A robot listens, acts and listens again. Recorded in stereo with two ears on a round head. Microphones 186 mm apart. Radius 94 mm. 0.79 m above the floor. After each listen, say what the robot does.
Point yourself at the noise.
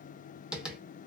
Turn 30° right.
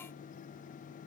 Keep listening.
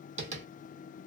Turn 140° right.
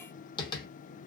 Turn 25° left.
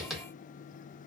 Facing the tapping, under 1 m away.